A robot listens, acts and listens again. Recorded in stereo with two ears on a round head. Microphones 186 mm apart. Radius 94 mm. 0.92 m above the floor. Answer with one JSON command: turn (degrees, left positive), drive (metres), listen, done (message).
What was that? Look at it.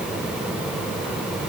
{"listen": true}
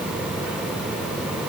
{"listen": true}
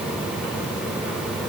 {"done": "I can't make out anything to turn to."}